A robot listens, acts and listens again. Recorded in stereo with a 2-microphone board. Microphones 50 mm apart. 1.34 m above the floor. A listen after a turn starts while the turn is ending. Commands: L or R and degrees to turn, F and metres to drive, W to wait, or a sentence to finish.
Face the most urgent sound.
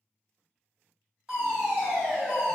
R30
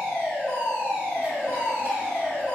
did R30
R145
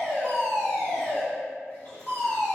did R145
Found it: a fire alarm, straight ahead, 1 to 2 m away.